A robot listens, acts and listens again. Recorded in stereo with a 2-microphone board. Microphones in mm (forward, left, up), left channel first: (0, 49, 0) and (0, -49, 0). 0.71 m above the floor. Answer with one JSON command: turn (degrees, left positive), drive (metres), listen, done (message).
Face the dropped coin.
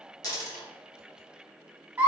{"turn": 40}
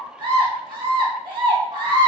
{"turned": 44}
{"listen": true}
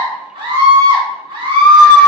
{"done": "I heard a dropped coin, but can't make it out now. It was about 5° right or 95° left."}